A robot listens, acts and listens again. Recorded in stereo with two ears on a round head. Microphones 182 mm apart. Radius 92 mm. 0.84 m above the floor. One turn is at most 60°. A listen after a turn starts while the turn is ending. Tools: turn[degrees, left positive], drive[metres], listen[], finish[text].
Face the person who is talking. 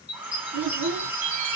Thought: The child speaking: about 75° right or 105° right.
Action: turn[-60]
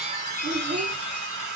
Thought: So it is at 25° right.
Action: turn[-25]
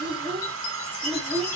Action: finish[Facing the child speaking.]